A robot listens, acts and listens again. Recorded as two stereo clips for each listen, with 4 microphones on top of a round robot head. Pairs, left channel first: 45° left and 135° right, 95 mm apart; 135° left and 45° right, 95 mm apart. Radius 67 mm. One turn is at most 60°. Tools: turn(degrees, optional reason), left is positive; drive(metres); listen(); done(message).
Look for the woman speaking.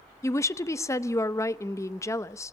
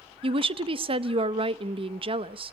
turn(degrees=-15, reason="The woman speaking: 15° right.")
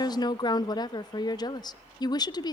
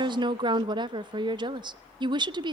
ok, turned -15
done("Found it: a woman speaking, straight ahead.")